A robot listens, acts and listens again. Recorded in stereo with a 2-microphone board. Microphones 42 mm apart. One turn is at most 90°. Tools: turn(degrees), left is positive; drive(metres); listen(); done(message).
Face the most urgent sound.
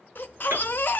turn(degrees=55)
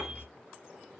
turn(degrees=70)
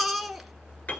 done("Facing the baby crying, 1 to 2 m away.")